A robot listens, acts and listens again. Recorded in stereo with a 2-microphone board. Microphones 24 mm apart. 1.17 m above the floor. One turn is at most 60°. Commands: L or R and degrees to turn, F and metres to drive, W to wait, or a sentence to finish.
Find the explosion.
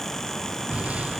R60
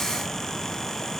W
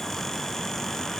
I heard an explosion, but can't make it out now. It was about 15° right or 45° right.